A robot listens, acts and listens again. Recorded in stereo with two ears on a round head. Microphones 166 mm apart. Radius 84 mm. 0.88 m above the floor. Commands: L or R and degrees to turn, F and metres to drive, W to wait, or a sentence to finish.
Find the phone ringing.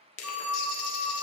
R30
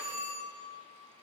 R145
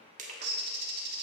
W
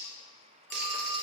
W
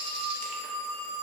L15
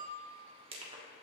W
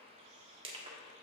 W
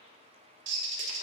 I heard a phone ringing from this way, but can't make it out now.